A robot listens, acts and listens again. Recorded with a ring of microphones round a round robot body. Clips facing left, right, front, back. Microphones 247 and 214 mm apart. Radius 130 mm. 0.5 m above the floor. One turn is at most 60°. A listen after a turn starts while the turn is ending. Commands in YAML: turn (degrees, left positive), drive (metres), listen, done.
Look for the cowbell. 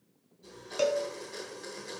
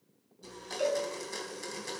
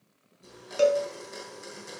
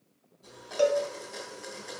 turn: 60
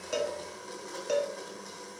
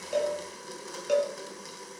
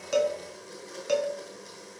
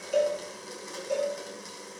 done: "Facing the cowbell, 1 to 2 m away."